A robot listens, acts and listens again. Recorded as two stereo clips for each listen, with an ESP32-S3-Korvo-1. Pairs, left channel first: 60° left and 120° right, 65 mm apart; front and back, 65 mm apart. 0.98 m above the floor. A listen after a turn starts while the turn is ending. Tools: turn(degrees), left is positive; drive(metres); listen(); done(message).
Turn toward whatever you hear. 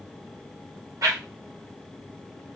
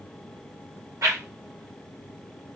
turn(degrees=-145)
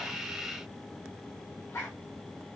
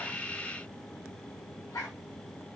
turn(degrees=15)
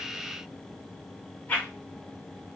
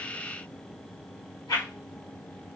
done("Found it: a whoosh, straight ahead.")